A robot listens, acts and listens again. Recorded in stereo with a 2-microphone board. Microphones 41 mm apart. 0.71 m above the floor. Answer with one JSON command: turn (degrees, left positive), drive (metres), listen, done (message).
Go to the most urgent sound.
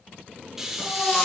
{"turn": 35}
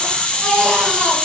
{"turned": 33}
{"drive": 1.0}
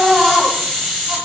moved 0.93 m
{"drive": 1.0}
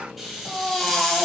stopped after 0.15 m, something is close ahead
{"turn": 10}
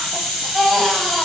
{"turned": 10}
{"done": "Arrived at the baby crying, straight ahead."}